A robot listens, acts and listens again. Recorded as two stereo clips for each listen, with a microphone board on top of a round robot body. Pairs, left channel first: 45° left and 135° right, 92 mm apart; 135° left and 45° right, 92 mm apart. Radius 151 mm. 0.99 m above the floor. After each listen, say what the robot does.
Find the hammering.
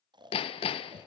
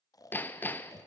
Turn 65° left.
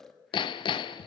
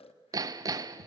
Turn 10° left.
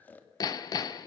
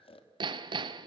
Facing the hammering, under 1 m away.